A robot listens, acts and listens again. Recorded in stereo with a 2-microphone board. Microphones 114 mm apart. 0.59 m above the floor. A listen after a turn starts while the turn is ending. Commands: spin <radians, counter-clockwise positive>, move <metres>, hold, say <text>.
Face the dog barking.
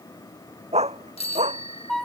spin -1.57
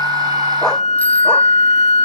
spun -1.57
hold
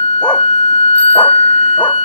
hold
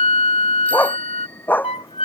spin 0.26
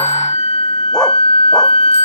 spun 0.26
hold
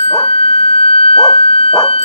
hold
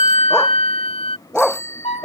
say Facing the dog barking.